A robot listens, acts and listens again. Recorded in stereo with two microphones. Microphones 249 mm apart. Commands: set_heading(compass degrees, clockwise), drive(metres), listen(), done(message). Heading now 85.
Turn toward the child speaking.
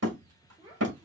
set_heading(105)
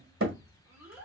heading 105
set_heading(135)
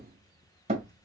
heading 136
listen()
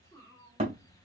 set_heading(126)
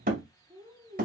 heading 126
set_heading(141)
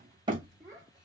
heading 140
set_heading(155)
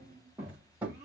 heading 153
set_heading(163)
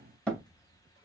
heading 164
listen()
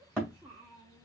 done("Found it: a child speaking, straight ahead, 1 to 2 m away.")